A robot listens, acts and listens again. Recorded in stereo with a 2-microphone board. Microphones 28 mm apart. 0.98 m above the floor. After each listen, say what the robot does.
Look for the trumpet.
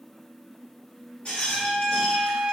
Turn 45° right.
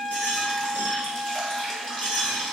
Turn 85° right.
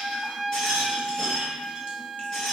Turn 20° right.
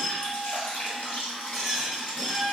Found it: a trumpet, straight ahead, under 1 m away.